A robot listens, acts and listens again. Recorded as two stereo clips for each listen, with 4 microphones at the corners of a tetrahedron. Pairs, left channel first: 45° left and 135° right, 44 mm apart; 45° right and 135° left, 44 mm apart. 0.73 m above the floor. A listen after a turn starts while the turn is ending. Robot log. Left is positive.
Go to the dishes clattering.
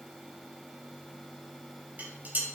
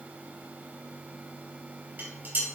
note: The dishes clattering: 175° left.
cmd yaw +175
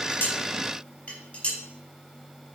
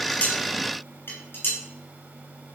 note: The dishes clattering is now 15° right.
cmd yaw -15
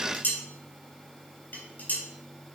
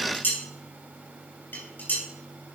cmd fwd 1.0
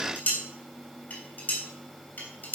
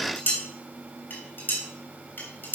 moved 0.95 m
cmd fwd 1.0
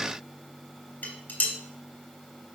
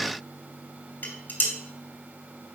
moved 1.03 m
cmd fwd 1.0
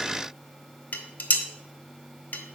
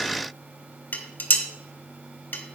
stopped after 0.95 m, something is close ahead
end: I am next to the dishes clattering.